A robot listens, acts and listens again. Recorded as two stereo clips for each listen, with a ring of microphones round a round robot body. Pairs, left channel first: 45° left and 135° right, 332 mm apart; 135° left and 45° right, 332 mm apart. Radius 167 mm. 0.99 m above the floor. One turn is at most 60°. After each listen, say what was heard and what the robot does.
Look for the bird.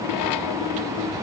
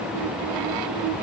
Keep listening.
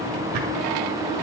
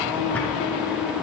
Keep listening.
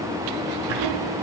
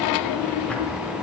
I can't make out a bird to turn to.